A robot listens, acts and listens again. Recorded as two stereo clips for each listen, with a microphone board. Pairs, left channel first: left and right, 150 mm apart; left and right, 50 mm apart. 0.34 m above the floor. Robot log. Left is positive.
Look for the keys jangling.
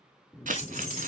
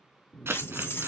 note: The keys jangling: about 55° left or 125° left.
cmd yaw +55
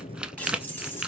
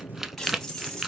note: So it is at 15° left.
cmd yaw +15
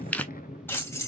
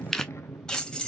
note: The keys jangling is now 20° left.
cmd yaw +20
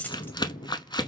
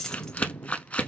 note: The keys jangling is now 10° left.
cmd yaw +10
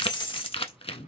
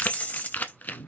note: The keys jangling is now 35° left.
cmd yaw +35
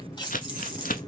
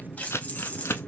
note: The keys jangling is now 30° left.
cmd yaw +30
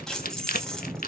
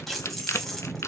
end: Found it: keys jangling, straight ahead, 1 to 2 m away.